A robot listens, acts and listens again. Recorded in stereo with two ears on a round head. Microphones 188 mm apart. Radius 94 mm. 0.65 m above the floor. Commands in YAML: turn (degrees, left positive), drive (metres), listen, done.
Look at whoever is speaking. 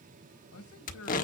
turn: 90
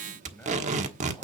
listen: true
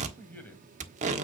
turn: 10
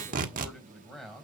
done: "Facing the man speaking, 2 to 4 m away."